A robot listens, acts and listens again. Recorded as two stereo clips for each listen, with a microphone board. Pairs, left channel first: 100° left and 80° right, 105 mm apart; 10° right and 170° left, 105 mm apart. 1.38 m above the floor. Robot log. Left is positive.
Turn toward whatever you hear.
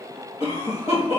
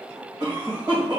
note: The cough: 125° left.
cmd yaw +125
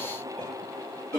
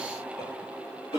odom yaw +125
note: The cough is now 45° left.
cmd yaw +45
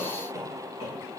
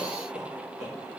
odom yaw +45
end: Found it: a cough, straight ahead, 1 to 2 m away.